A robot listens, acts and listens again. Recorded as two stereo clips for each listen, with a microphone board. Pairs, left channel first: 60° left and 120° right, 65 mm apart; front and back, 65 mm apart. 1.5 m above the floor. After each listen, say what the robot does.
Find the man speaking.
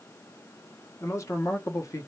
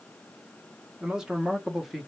Turn 90° left.
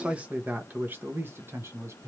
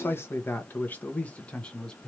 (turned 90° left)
Turn 75° right.
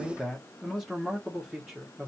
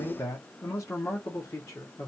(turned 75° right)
Turn 35° right.
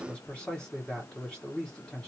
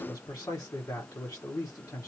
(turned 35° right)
Turn 15° right.
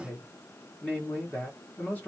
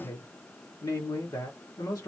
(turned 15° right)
Found it: a man speaking, straight ahead, 1 to 2 m away.